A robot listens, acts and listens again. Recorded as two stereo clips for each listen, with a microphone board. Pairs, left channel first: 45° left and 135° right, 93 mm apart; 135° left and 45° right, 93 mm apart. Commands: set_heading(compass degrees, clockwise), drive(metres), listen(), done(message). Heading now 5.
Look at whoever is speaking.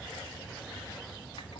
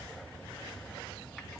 listen()
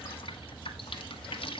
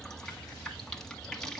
listen()
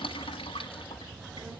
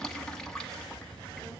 set_heading(105)
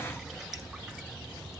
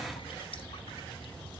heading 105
set_heading(120)
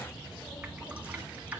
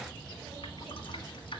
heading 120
listen()
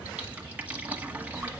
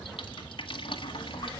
done("Facing the child speaking.")